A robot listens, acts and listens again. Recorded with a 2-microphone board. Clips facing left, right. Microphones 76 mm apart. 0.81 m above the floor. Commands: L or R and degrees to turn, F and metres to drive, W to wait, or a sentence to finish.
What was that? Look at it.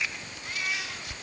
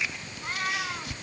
R50
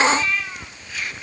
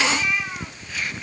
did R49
R15
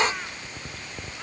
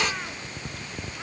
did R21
W
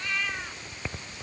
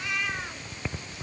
R10
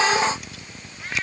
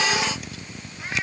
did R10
R10
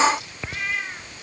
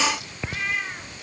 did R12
Facing the cat meowing.